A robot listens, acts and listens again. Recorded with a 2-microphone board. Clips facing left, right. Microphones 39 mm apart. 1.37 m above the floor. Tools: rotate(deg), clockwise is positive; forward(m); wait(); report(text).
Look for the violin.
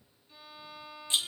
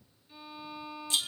rotate(30)
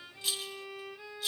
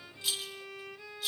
rotate(-30)
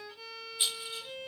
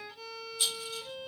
report("Found it: a violin, straight ahead, 1 to 2 m away.")